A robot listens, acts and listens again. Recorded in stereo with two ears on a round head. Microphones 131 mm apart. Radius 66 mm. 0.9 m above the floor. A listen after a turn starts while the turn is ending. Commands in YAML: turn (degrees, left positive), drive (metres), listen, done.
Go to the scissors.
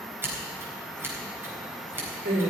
turn: -15
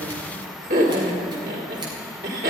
listen: true
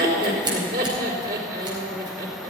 listen: true
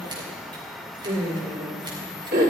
done: "I heard scissors, but can't make it out now. It was about straight ahead or 150° right. I did not reach it."